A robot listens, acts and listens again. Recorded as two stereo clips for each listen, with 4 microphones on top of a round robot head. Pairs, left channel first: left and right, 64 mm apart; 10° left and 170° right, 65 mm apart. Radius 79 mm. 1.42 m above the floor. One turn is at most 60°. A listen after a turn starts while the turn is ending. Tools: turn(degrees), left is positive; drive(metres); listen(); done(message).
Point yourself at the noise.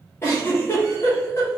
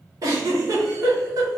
turn(degrees=60)
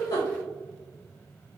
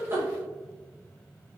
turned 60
turn(degrees=60)
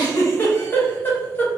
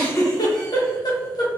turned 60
turn(degrees=30)
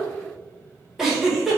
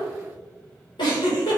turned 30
done("Facing the giggle.")